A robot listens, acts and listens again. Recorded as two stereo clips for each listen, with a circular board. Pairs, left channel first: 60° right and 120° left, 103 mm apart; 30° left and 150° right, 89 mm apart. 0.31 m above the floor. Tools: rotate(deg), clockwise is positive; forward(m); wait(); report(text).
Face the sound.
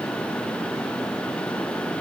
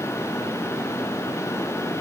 wait()
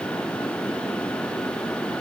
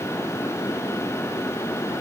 wait()
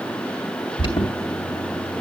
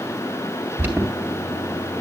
rotate(85)
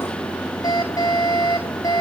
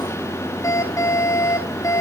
rotate(15)
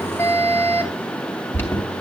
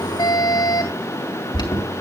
report("Facing the alarm, 2 to 4 m away.")